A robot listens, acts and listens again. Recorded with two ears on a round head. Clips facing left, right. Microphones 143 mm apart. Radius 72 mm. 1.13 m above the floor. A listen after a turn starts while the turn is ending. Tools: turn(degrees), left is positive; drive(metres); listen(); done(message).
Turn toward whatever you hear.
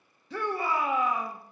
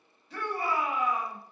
turn(degrees=65)
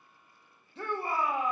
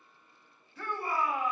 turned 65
turn(degrees=25)
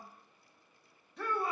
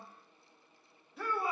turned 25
done("Facing the shout, 1 to 2 m away.")